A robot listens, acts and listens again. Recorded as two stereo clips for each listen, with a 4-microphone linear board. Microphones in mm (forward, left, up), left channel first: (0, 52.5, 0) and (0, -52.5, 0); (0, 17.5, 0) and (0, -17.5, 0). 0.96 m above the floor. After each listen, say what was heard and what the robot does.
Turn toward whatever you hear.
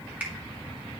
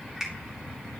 The finger snap: about 15° right or 165° right. Turn 15° right.
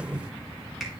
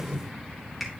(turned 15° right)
Keep listening.
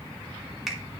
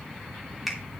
Facing the finger snap, 2 to 4 m away.